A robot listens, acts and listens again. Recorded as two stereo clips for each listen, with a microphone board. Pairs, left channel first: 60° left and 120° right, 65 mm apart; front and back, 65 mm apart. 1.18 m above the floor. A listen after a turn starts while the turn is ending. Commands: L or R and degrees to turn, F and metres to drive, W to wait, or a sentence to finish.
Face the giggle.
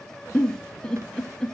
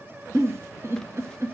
L135
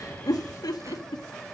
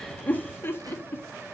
L55
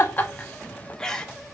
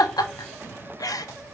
R20
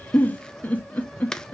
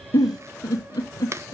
Facing the giggle.